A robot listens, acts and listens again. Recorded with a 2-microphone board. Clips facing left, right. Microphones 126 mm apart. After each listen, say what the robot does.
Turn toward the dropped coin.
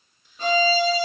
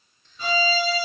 Keep listening.
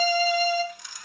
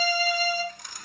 Turn 50° right.
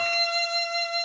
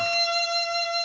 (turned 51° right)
Keep listening.
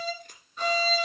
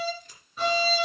I heard a dropped coin, but can't make it out now. It was about straight ahead or 80° right.